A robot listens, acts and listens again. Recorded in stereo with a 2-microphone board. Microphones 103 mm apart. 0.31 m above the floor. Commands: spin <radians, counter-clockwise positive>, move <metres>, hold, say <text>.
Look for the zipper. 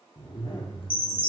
spin 0.96
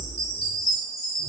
spin 1.22
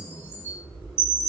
say Found it: a zipper, straight ahead, 1 to 2 m away.